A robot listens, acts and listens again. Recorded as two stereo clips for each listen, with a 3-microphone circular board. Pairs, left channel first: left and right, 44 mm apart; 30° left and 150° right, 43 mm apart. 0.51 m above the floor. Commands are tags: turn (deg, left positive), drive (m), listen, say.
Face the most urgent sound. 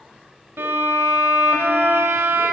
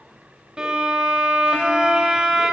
<listen/>
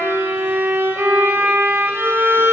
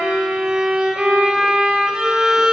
<listen/>
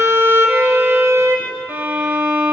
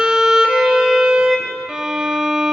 <say>I can't make out anything urgent, only a violin.</say>